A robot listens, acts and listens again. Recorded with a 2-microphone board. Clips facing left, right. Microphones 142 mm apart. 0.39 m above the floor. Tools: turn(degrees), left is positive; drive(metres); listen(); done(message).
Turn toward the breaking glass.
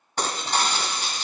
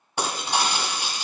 turn(degrees=-30)
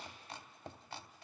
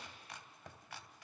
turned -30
listen()
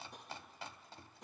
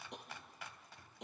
done("I heard breaking glass, but can't make it out now. It was about 20° left or 140° right.")